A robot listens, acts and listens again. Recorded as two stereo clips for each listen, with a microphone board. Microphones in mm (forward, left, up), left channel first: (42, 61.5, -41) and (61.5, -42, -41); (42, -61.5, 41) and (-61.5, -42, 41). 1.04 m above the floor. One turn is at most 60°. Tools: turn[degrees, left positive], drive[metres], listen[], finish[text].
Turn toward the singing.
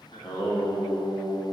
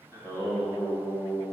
Thought: The singing: 40° left.
Action: turn[40]
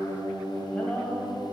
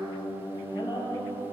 Thought: The singing is now 15° left.
Action: turn[15]
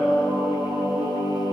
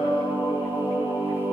Thought: The singing is now 25° right.
Action: turn[-25]
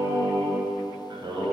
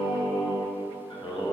Thought: The singing is now 40° right.
Action: turn[-40]
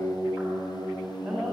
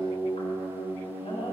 Action: finish[Facing the singing.]